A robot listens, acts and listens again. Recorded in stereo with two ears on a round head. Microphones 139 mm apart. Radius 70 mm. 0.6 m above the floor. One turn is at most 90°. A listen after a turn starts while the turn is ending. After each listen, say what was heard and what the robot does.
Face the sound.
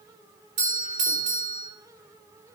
The doorbell: about 50° right or 130° right. Turn 50° right.
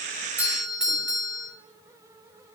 Found it: a doorbell, straight ahead, 2 to 4 m away.